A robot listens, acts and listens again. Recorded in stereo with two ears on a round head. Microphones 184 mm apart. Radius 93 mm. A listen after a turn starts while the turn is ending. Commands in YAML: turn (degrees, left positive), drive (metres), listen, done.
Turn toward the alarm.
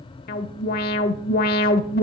turn: 45
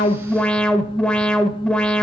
done: "Facing the alarm."